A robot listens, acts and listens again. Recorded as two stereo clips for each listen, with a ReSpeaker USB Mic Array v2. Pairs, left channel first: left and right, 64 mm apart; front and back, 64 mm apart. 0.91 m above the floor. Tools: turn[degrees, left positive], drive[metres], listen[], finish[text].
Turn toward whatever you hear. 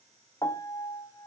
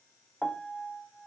Thought: The piano: 90° left.
Action: turn[90]
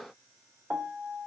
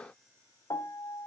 Thought: The piano is now 20° right.
Action: turn[-20]
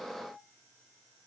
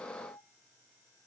Action: finish[Facing the piano.]